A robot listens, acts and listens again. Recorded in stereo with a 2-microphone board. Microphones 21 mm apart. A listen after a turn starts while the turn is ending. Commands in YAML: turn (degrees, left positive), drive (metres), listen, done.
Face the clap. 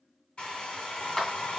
turn: 15
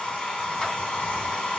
listen: true
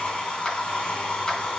turn: 150
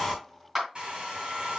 turn: -15
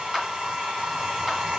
listen: true
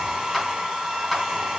listen: true
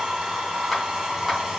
done: "Facing where the clap came from. I can't hear it now."